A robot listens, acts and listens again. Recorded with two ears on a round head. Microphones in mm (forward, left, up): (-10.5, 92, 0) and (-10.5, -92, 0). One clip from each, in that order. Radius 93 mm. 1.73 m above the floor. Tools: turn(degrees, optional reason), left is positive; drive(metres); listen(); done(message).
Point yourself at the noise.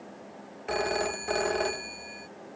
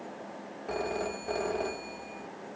turn(degrees=50, reason="The phone ringing: about 50° left or 130° left.")
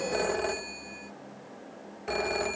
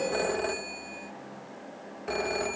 turn(degrees=10, reason="So it is at 10° left.")
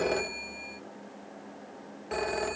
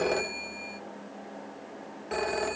done("Found it: a phone ringing, straight ahead.")